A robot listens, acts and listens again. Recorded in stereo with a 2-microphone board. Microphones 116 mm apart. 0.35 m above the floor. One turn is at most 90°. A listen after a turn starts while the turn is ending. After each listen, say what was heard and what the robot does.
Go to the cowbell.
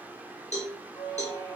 Turn 90° left.
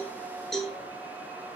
Drive 1.0 m forward.
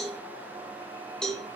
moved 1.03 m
Drive 1.0 m forward.
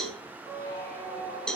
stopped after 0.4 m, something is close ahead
Arrived at the cowbell, straight ahead.